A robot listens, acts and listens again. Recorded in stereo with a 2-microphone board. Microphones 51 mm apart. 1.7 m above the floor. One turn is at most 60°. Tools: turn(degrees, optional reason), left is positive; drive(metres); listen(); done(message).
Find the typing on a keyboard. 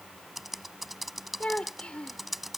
turn(degrees=30)
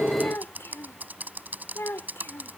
turn(degrees=-35, reason="So it is at 35° right.")
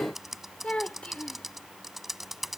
done("Found it: typing on a keyboard, straight ahead.")